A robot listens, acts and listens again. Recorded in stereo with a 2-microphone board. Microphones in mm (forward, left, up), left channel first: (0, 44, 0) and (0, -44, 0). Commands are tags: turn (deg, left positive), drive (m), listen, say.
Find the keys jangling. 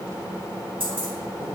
<turn deg="-90"/>
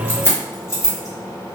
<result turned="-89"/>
<turn deg="35"/>
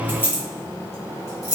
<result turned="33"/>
<turn deg="40"/>
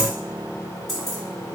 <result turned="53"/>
<say>Found it: keys jangling, straight ahead, 1 to 2 m away.</say>